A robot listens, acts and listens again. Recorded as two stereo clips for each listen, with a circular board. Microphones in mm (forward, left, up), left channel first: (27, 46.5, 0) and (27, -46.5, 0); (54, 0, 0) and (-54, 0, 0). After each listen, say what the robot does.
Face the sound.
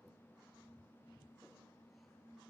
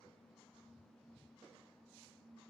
Keep listening.
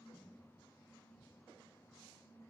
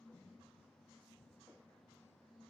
Keep listening.
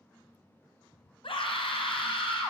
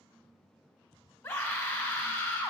Turn 60° left.
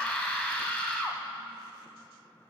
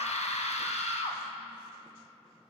Facing the scream, under 1 m away.